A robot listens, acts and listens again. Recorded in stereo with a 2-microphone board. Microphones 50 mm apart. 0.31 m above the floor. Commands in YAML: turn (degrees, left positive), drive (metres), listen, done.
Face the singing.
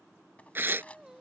turn: -30
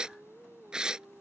turn: -140
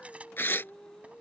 turn: 10
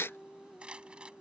done: "Found it: singing, straight ahead."